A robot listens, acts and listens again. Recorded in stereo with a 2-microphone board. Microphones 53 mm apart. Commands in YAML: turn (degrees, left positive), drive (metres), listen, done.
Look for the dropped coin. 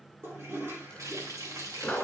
turn: 15
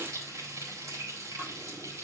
listen: true
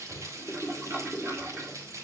done: "I heard a dropped coin, but can't make it out now. It was about straight ahead or 150° left."